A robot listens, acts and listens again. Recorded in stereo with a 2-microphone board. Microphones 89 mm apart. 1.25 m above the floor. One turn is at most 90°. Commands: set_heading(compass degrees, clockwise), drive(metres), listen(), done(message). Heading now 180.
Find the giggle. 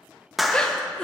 set_heading(150)
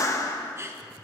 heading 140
set_heading(170)
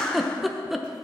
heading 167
done("Facing the giggle, under 1 m away.")